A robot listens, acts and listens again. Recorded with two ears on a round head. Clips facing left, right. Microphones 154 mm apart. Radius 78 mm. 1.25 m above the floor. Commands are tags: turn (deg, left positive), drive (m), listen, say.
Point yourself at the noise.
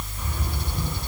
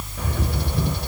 <turn deg="-55"/>
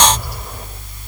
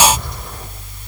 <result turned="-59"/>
<say>Facing the bird.</say>